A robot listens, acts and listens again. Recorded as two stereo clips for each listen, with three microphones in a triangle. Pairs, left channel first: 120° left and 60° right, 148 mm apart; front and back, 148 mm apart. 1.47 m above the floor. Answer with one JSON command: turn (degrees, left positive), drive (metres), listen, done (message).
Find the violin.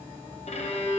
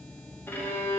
{"turn": 75}
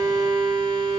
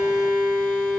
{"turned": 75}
{"done": "Found it: a violin, straight ahead, under 1 m away."}